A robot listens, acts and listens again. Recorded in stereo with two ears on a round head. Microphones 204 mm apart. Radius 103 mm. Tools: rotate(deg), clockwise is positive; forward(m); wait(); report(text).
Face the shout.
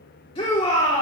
rotate(-25)
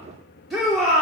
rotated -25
report("Facing the shout.")